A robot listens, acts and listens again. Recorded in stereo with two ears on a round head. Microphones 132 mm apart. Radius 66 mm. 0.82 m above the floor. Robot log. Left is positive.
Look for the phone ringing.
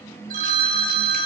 note: The phone ringing: about 60° right or 120° right.
cmd yaw -60
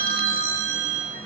note: So it is at 60° right.
cmd yaw -60
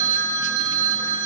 note: The phone ringing is now 25° right.
cmd yaw -25
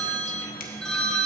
end: Facing the phone ringing, under 1 m away.